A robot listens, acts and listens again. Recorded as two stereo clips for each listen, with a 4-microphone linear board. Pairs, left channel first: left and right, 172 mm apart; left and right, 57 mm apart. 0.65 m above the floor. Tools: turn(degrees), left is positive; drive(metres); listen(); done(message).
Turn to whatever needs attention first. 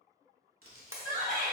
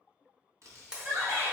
turn(degrees=-50)
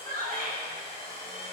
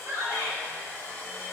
turn(degrees=-65)
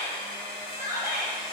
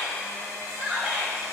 turn(degrees=-15)
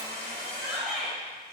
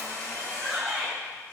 done("Found it: a shout, straight ahead.")